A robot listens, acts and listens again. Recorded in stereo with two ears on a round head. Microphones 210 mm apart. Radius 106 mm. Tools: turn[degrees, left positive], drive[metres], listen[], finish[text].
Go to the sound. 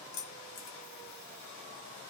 Action: turn[90]
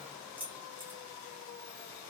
Thought: So it is at 10° right.
Action: turn[-10]
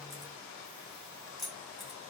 Action: drive[1.0]
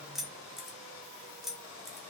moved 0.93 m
Action: drive[1.0]
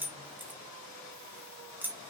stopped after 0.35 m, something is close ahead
Thought: The keys jangling is now 10° right.
Action: turn[-10]
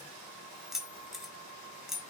Action: finish[I am next to the keys jangling.]